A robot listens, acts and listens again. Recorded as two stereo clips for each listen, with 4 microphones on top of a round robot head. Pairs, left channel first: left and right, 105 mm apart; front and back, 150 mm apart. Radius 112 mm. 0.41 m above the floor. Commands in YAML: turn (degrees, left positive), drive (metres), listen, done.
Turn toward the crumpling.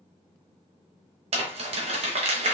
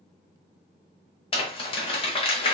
turn: -60
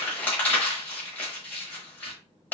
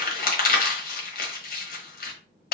turn: 10
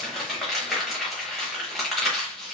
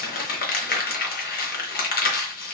done: "Facing the crumpling, 1 to 2 m away."